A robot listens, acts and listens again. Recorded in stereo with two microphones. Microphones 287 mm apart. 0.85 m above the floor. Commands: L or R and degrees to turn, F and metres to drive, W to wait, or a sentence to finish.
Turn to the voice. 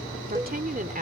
R30
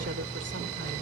W
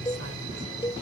W
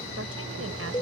I heard a woman speaking, but can't make it out now. It was about straight ahead or 120° right.